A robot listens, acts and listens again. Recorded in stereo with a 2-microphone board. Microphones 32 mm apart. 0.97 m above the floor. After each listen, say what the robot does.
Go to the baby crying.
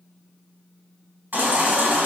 Turn 90° right.
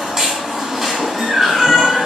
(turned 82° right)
Turn 20° right.
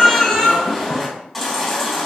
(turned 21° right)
Drive 1.0 m forward.
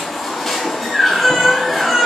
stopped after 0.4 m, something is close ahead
Something is in my way. I am facing the baby crying but have not reached it.